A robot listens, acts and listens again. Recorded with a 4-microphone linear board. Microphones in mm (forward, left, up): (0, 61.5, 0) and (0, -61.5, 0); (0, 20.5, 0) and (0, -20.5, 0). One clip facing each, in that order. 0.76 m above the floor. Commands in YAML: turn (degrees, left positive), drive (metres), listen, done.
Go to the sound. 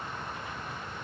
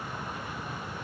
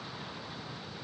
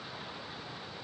listen: true
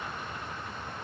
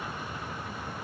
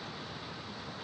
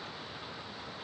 listen: true
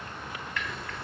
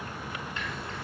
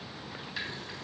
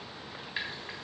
turn: -25
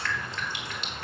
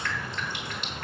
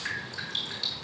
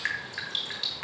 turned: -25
turn: -130
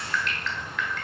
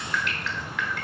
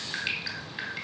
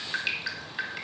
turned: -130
drive: 1.0
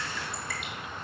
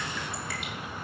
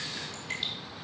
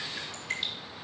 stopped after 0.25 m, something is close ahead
done: "Something is in my way. I am facing the dripping but have not reached it."